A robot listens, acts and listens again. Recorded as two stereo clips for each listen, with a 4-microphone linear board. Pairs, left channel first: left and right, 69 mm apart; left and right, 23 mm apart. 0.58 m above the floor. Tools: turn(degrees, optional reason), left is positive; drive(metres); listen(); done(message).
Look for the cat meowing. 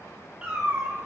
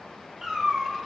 turn(degrees=-30)
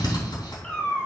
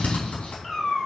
turn(degrees=15, reason="So it is at 15° left.")
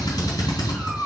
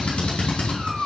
done("Facing the cat meowing.")